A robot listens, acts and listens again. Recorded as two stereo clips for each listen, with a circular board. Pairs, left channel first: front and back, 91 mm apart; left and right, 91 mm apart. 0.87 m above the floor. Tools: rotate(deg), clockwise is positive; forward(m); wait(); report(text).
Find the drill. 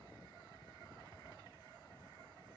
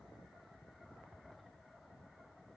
wait()
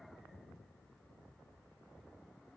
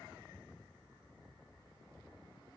wait()
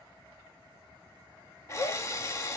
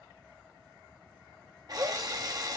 rotate(50)
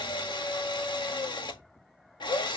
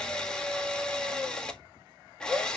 rotate(-10)
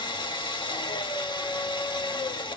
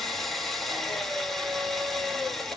report("Facing the drill, 1 to 2 m away.")